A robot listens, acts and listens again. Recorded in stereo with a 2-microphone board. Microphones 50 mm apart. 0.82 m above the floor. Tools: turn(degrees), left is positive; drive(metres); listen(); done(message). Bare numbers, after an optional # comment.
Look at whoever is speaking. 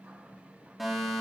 listen()
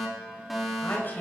# The woman speaking: about 35° left or 145° left.
turn(35)
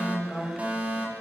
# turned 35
done("Facing the woman speaking, 2 to 4 m away.")